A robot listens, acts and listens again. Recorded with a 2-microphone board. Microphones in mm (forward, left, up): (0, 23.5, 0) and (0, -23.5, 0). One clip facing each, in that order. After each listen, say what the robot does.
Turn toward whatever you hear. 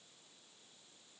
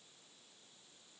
Keep listening.
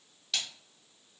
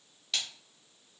Turn 30° left.
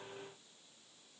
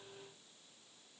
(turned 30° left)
Keep listening.
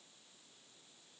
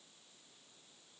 I heard a splash, but can't make it out now. It was about 30° right or 150° left.